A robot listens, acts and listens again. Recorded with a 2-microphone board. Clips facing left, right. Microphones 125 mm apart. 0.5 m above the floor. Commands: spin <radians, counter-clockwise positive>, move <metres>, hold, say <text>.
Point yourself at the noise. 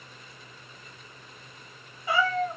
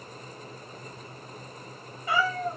spin 0.35
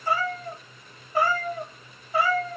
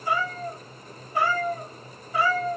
spin 0.70
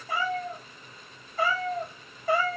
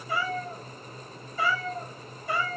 spin 1.83
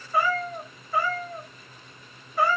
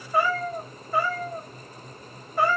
say Facing the cat meowing.